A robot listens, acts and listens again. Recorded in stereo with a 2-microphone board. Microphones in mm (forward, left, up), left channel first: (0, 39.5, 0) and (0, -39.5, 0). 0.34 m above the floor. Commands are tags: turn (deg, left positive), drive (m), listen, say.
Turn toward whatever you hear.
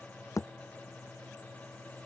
<turn deg="45"/>
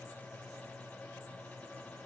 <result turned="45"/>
<listen/>
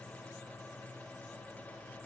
<say>I heard a thud, but can't make it out now. It was about straight ahead or 90° left.</say>